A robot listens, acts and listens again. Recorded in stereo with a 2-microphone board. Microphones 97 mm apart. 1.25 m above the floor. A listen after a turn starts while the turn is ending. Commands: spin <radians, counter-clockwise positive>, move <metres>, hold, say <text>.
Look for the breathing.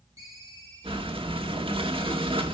spin -1.22
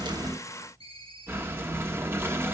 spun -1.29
spin -0.44
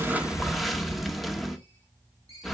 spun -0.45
say Facing the breathing, 1 to 2 m away.